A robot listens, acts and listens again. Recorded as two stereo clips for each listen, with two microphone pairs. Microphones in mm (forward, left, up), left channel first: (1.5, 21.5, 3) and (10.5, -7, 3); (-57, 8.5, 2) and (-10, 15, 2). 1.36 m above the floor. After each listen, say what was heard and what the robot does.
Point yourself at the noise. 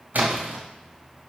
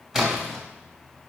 The splash: 70° right. Turn 70° right.
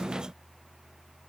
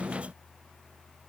Facing where the splash came from. I can't hear it now.